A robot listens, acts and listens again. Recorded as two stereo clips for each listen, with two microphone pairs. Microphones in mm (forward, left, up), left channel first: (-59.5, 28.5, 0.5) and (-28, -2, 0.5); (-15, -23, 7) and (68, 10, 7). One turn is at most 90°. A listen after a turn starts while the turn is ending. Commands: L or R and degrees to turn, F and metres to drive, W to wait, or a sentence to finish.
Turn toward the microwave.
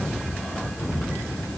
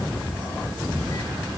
W
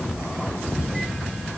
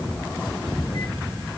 W
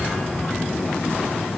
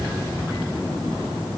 I can't make out a microwave.